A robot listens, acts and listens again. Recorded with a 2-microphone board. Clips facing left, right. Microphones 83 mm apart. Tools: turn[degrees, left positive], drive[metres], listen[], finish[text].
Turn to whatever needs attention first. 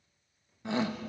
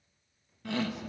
Thought: The shout: about 20° left or 160° left.
Action: turn[20]
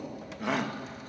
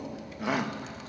Action: finish[Facing the shout.]